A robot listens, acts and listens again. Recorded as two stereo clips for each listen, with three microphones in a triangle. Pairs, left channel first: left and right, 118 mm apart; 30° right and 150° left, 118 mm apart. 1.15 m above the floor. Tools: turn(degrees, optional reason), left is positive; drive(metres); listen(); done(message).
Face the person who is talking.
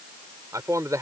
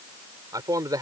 turn(degrees=-150, reason="The man speaking: 150° right.")
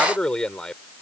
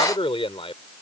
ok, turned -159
done("Found it: a man speaking, straight ahead.")